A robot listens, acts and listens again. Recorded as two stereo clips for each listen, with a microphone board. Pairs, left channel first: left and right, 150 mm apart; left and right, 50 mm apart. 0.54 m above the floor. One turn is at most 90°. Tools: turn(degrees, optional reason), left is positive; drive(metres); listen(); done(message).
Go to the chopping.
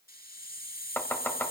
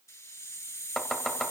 turn(degrees=30)
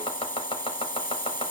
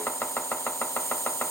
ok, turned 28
turn(degrees=90, reason="So it is at 135° left.")
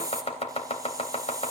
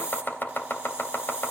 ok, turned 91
turn(degrees=45, reason="The chopping is now 45° left.")
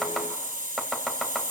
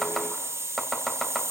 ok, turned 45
drive(metres=1.0)
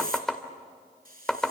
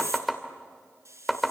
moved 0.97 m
drive(metres=1.0)
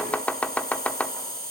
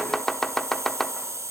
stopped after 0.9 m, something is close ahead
turn(degrees=15, reason="The chopping is now 15° left.")
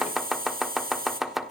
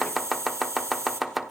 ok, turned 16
done("Arrived at the chopping, straight ahead.")